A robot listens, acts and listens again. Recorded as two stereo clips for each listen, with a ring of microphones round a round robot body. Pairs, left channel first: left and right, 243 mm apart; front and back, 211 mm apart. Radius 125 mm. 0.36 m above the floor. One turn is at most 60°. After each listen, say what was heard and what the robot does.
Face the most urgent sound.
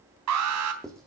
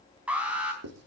The alarm: 95° right. Turn 60° right.
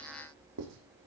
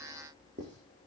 Nothing new. It was at 35° right. Turn 35° right.
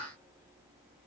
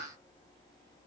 Keep listening.
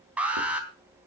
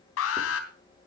Found it: an alarm, straight ahead.